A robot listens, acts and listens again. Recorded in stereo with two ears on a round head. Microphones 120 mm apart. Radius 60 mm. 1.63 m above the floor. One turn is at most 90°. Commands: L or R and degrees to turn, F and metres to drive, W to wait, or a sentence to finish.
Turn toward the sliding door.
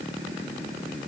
W
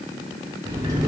R25
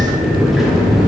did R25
Facing the sliding door.